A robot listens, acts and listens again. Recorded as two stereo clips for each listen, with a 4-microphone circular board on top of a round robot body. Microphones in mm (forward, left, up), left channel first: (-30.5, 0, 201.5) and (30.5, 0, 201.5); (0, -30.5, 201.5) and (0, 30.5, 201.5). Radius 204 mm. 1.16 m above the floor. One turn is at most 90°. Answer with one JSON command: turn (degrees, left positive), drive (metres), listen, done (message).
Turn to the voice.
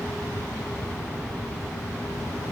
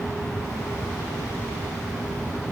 {"listen": true}
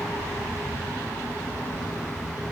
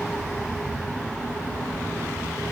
{"listen": true}
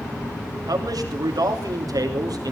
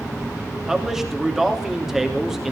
{"done": "Facing the man speaking."}